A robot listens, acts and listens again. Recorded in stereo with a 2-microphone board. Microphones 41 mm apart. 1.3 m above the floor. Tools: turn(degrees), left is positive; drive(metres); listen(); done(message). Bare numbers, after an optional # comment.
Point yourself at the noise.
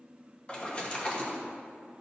# The splash: about 25° left or 155° left.
turn(25)
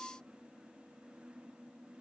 listen()
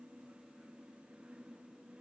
done("I heard a splash, but can't make it out now. It was about straight ahead or 130° left.")